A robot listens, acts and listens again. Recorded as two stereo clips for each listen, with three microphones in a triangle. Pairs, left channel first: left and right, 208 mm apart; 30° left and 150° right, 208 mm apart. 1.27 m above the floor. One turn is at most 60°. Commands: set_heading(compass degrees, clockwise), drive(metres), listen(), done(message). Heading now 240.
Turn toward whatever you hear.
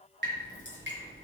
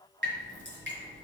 set_heading(300)
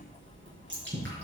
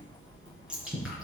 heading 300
set_heading(0)
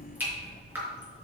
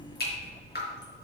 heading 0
set_heading(10)
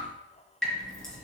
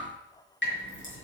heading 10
done("Found it: dripping, straight ahead, over 4 m away.")